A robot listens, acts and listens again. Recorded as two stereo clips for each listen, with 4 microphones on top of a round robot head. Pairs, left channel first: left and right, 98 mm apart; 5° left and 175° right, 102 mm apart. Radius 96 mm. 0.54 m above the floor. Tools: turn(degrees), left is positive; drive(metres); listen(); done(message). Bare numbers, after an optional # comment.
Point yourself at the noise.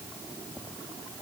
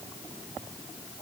listen()
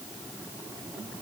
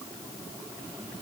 listen()
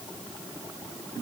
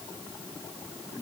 done("I can't make out anything to turn to.")